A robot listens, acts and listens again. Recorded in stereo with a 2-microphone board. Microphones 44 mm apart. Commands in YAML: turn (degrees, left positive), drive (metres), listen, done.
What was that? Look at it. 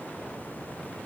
listen: true
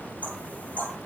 turn: 30
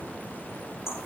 turn: 120
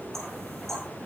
turn: 10
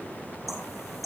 done: "Facing the knocking."